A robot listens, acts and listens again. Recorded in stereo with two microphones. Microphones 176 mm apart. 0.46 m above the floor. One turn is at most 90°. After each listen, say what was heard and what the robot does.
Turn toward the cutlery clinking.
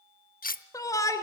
The cutlery clinking: about 55° left or 125° left. Turn 55° left.
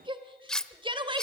Facing the cutlery clinking, under 1 m away.